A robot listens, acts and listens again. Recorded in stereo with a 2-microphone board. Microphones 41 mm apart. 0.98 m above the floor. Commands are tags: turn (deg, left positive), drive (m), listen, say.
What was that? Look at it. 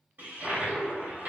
<turn deg="-60"/>
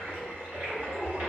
<turn deg="-55"/>
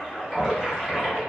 <say>Facing the toilet flushing, 2 to 4 m away.</say>